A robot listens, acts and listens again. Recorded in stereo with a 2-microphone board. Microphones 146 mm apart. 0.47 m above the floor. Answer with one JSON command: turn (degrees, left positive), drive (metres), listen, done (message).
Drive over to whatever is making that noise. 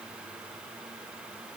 {"listen": true}
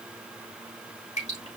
{"turn": 55}
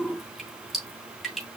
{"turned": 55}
{"drive": 1.0}
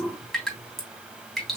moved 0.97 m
{"drive": 1.0}
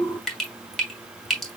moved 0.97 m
{"drive": 1.0}
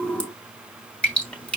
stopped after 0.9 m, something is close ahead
{"turn": 10}
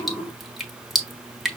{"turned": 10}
{"done": "I am next to the dripping."}